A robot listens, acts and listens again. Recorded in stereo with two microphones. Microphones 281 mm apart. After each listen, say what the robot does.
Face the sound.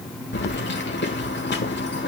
Turn 40° left.
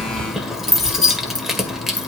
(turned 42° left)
Facing the keys jangling.